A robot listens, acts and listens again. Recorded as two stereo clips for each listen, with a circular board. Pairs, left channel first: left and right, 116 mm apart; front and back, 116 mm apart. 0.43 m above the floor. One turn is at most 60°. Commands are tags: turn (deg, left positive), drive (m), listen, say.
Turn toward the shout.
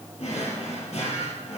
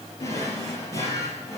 <listen/>
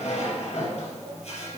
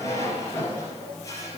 <listen/>
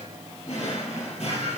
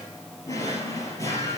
<say>I can't make out a shout, only a drawer.</say>